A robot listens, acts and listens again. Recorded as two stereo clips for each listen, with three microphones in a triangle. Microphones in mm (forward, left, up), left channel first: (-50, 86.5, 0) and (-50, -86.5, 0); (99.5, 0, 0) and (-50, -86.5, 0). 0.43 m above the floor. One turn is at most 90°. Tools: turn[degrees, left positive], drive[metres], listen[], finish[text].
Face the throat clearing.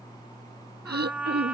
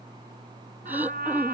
Thought: The throat clearing: 70° right.
Action: turn[-70]
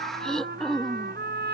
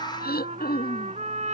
Action: finish[Facing the throat clearing.]